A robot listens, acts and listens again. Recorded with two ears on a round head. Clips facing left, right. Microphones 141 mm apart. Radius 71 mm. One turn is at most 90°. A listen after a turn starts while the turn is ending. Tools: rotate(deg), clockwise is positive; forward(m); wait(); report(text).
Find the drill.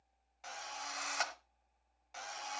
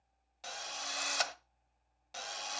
rotate(40)
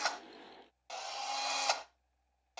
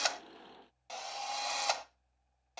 report("Found it: a drill, straight ahead, 1 to 2 m away.")